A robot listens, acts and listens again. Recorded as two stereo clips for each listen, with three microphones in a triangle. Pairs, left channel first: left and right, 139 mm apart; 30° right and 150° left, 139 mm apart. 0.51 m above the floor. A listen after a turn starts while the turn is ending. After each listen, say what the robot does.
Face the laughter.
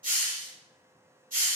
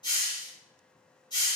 Keep listening.
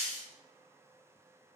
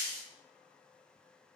Keep listening.
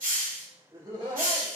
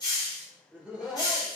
Turn 125° right.
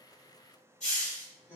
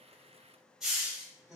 Turn 65° left.
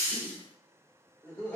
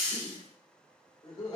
Found it: laughter, straight ahead, 1 to 2 m away.